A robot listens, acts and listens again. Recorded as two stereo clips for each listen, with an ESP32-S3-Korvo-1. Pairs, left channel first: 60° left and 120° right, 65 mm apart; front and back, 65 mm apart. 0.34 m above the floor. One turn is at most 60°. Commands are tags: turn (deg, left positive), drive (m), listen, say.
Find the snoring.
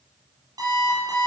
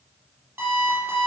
<listen/>
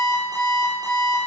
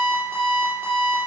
<listen/>
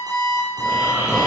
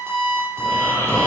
<turn deg="-55"/>
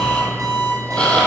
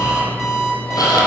<turn deg="-15"/>
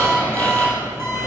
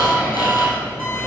<say>Found it: snoring, straight ahead, 2 to 4 m away.</say>